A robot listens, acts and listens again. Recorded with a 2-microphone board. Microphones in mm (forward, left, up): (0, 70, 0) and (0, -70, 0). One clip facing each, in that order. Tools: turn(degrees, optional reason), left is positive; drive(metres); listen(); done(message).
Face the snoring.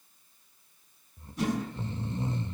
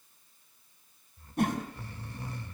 turn(degrees=20, reason="The snoring: about 20° left or 160° left.")
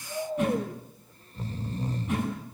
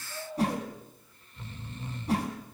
turn(degrees=140, reason="So it is at 140° left.")
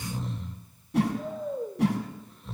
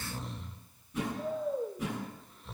done("Found it: snoring, straight ahead, 1 to 2 m away.")